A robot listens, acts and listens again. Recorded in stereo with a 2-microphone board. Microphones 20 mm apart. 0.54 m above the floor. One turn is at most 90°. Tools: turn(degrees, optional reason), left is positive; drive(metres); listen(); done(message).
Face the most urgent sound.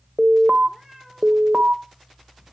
turn(degrees=-70, reason="The alarm: about 70° right or 110° right.")
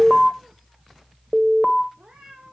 turn(degrees=-10, reason="So it is at 10° right.")
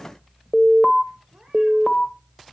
done("Found it: an alarm, straight ahead, 1 to 2 m away.")